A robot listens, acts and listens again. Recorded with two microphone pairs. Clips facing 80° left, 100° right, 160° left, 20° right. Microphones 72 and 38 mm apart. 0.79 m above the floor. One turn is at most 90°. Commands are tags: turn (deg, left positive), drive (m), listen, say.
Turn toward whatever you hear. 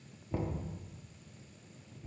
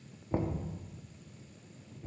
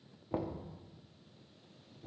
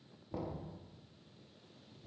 <turn deg="-90"/>
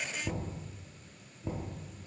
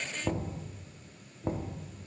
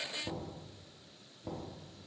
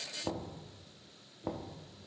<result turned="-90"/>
<turn deg="-70"/>
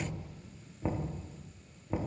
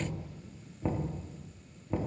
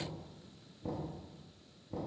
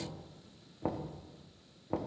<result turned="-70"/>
<say>Found it: knocking, straight ahead.</say>